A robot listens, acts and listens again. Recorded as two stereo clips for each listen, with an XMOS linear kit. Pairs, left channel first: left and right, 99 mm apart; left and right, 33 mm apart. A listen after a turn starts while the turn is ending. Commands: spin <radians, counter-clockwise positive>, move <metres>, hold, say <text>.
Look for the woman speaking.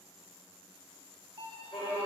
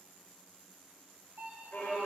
hold
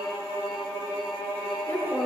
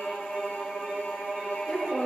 spin 0.26
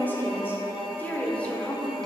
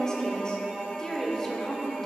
spin 0.52
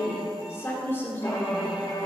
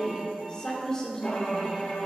spin 0.35
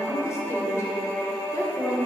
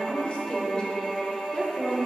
spin 2.62
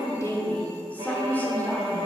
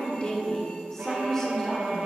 spin 0.35
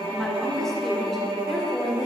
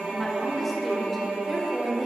say Facing the woman speaking, 1 to 2 m away.